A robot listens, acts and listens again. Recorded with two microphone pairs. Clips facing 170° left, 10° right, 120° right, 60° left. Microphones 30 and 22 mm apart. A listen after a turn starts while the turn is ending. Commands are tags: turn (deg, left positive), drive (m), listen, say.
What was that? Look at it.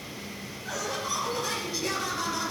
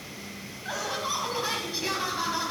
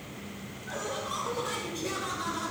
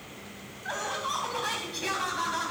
<turn deg="60"/>
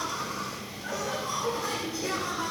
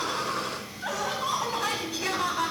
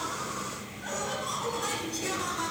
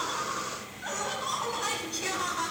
<turn deg="-15"/>
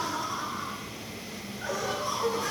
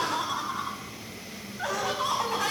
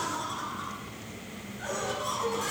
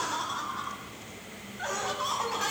<say>Facing the laughter.</say>